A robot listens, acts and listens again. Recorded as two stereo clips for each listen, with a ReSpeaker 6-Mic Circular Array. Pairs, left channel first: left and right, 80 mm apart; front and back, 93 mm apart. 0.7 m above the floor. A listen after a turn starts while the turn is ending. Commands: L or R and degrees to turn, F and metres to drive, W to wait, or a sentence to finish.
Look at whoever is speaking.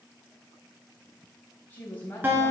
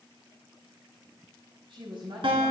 L155
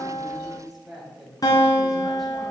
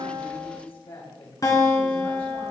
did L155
Found it: a woman speaking, straight ahead.